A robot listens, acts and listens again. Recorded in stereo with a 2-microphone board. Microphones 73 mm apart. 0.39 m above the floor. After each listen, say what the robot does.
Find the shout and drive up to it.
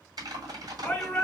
Turn 15° left.
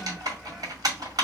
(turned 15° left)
Keep listening.
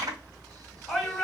Drive 1.0 m forward.
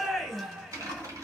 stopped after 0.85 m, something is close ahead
Arrived at the shout, straight ahead.